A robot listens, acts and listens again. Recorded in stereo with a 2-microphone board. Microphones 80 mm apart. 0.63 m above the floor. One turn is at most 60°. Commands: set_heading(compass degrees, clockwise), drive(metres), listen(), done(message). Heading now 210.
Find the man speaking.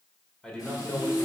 set_heading(180)
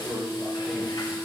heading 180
done("Found it: a man speaking, straight ahead.")